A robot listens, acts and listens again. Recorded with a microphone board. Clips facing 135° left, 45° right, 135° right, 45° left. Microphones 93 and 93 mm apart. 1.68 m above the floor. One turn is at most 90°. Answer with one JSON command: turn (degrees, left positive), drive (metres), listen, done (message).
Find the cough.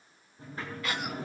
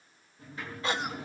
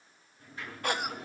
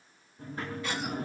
{"turn": -90}
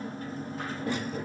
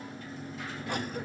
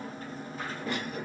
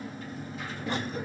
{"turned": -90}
{"turn": -15}
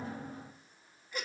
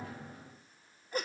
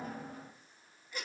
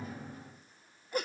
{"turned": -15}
{"done": "Found it: a cough, straight ahead, 1 to 2 m away."}